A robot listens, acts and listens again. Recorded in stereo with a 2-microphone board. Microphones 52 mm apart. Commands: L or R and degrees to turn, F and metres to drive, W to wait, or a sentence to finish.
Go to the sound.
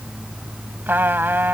R45
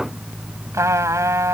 R90
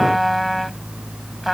F1.0
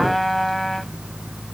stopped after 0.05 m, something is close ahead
Blocked. The trumpet is further on, straight ahead.